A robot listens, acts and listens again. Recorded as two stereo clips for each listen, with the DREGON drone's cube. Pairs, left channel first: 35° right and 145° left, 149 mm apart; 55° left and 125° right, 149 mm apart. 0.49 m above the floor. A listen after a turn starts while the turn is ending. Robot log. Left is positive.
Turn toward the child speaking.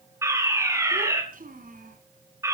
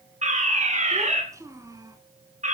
note: The child speaking: 170° left.
cmd yaw +170
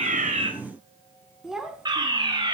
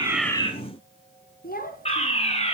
note: The child speaking is now 60° left.
cmd yaw +60
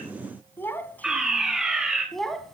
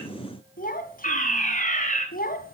note: The child speaking is now 55° left.
cmd yaw +55
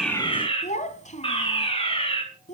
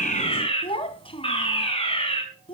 end: Found it: a child speaking, straight ahead, 1 to 2 m away.